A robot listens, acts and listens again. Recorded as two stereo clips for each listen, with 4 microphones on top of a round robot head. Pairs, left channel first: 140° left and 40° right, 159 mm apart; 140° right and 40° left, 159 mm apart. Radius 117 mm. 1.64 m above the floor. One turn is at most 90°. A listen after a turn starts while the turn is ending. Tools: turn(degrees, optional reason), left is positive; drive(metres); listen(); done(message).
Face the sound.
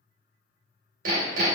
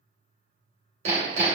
done("Found it: hammering, straight ahead.")